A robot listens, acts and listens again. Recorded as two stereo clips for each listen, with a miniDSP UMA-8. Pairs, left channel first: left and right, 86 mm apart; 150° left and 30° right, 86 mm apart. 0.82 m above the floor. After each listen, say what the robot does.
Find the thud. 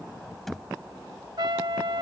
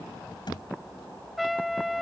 Turn 180° left.
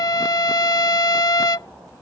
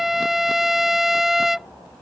Facing where the thud came from. I can't hear it now.